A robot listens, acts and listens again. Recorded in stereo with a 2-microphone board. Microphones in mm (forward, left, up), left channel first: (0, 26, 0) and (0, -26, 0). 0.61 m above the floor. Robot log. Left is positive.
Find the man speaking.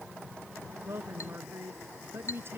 note: The man speaking: about 45° right or 135° right.
cmd yaw -45
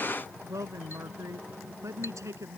note: So it is at 80° right.
cmd yaw -80
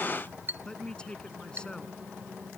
note: The man speaking is now 15° left.
cmd yaw +15
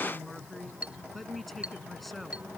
end: Facing the man speaking.